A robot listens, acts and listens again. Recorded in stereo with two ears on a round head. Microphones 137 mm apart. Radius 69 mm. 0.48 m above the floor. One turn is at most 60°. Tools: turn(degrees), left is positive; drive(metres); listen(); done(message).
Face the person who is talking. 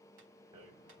listen()
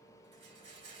listen()
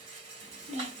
turn(degrees=-40)
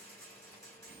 turn(degrees=-60)
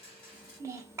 turn(degrees=-20)
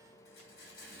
listen()
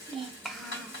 done("Found it: a child speaking, straight ahead.")